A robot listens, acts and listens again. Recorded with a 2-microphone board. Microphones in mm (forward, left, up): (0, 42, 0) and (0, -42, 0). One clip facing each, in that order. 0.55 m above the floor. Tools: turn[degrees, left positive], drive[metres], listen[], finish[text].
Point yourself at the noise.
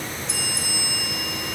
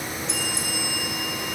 Action: turn[30]
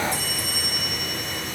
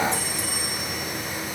Thought: So it is at 30° right.
Action: turn[-30]
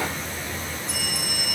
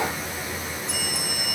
Action: finish[Facing the bell, 2 to 4 m away.]